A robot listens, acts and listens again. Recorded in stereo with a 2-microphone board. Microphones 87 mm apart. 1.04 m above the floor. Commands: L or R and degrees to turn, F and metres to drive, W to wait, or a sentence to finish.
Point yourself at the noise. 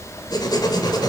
L50
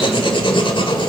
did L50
L80
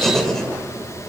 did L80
Facing the writing.